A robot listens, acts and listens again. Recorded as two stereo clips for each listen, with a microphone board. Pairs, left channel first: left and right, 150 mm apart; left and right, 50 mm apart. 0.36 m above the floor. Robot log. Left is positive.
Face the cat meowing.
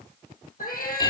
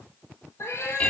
note: The cat meowing: about 75° left or 105° left.
cmd yaw +75
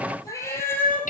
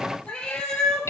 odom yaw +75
note: So it is at 10° left.
cmd yaw +10
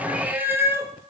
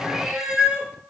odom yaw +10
note: The cat meowing is now 20° right.
cmd yaw -20
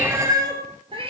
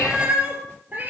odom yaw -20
note: The cat meowing is now 40° right.
cmd yaw -40
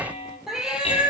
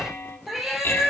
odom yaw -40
note: The cat meowing is now 10° right.
cmd yaw -10
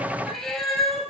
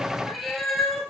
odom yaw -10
end: Facing the cat meowing, 1 to 2 m away.